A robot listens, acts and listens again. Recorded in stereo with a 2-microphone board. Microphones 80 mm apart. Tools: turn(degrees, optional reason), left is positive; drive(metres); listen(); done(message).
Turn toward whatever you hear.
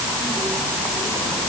listen()
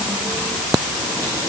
listen()
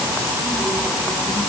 done("I can't make out anything to turn to.")